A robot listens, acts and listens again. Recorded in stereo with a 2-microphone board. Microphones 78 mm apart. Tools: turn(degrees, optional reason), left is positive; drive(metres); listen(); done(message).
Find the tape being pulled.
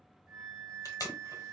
turn(degrees=45, reason="The tape being pulled: about 45° left or 135° left.")
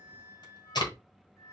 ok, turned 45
turn(degrees=85, reason="So it is at 85° left.")
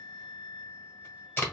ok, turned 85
turn(degrees=30, reason="The tape being pulled is now 30° left.")
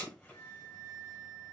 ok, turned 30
turn(degrees=25, reason="The tape being pulled is now 25° left.")
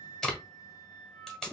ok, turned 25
done("Facing the tape being pulled.")